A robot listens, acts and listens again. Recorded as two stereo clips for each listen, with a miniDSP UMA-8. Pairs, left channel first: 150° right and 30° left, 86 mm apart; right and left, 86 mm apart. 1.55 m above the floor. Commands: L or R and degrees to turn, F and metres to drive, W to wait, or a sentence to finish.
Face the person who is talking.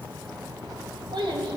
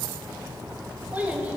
L20
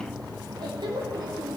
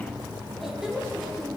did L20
Found it: a child speaking, straight ahead, 1 to 2 m away.